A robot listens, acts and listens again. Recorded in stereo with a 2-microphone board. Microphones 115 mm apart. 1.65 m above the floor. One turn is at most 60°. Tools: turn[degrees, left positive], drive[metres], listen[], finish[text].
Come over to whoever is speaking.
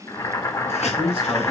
Thought: The man speaking: about 50° right or 130° right.
Action: turn[-50]
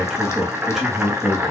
Action: drive[1.0]
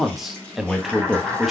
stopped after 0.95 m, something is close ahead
Action: finish[I am next to the man speaking.]